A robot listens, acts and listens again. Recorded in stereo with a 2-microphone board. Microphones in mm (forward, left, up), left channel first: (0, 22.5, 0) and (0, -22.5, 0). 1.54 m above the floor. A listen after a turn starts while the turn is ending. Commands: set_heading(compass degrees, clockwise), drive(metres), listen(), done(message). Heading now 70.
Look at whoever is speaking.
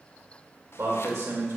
set_heading(160)
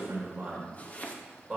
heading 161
set_heading(171)
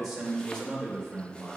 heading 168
done("Found it: a man speaking, straight ahead, 2 to 4 m away.")